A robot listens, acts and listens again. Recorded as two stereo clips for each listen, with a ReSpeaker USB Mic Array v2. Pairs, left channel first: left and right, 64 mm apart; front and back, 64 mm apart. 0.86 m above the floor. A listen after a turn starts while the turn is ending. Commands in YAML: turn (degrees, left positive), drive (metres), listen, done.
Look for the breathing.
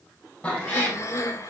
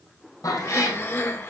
turn: 50
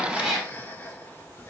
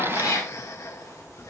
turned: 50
turn: 30
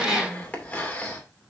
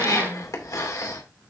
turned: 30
turn: 20
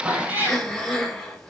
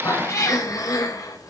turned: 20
done: "Found it: breathing, straight ahead."